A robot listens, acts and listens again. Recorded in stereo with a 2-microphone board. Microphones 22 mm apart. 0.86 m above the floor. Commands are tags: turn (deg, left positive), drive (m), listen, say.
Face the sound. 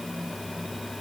<listen/>
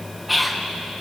<turn deg="-30"/>
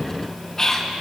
<turn deg="20"/>
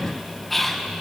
<say>Facing the whispering, 1 to 2 m away.</say>